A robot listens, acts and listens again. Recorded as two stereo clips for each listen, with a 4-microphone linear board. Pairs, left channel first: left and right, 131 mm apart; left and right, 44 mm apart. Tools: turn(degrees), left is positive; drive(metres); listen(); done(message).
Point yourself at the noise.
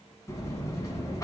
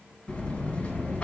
turn(degrees=25)
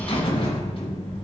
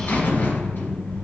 turn(degrees=125)
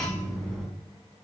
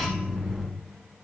done("Found it: a buzzer, straight ahead, 1 to 2 m away.")